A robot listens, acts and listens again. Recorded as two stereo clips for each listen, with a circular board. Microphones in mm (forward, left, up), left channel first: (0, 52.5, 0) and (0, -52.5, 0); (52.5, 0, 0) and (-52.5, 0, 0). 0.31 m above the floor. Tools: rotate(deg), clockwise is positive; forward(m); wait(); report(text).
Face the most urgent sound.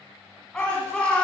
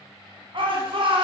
rotate(-170)
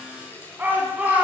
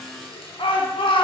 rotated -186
rotate(20)
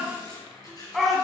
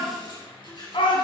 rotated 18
report("Found it: a shout, straight ahead, 2 to 4 m away.")